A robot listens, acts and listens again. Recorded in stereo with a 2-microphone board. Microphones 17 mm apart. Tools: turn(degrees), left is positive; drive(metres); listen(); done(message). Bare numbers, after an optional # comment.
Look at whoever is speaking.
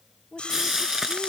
# The woman speaking: about 45° left or 135° left.
turn(45)
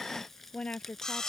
# So it is at 90° left.
turn(90)
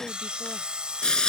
listen()
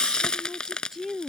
# The woman speaking is now 25° right.
turn(-25)
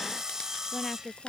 # The woman speaking is now 15° left.
turn(15)
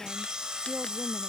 listen()
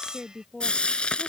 done("Found it: a woman speaking, straight ahead.")